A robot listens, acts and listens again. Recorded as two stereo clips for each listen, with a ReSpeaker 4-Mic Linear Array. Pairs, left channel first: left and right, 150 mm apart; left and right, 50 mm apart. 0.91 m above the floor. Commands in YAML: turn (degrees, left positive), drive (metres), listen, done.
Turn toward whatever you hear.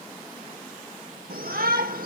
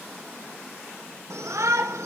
turn: -90
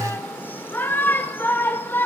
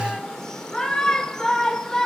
turn: 15
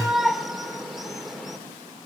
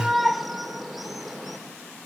done: "Facing the shout, 2 to 4 m away."